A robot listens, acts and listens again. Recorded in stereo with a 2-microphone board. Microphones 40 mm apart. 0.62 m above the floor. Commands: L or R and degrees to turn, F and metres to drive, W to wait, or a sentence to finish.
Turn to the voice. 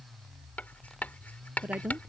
R40
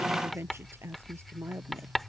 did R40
R100
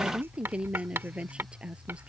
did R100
R25
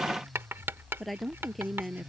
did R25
Facing the woman speaking.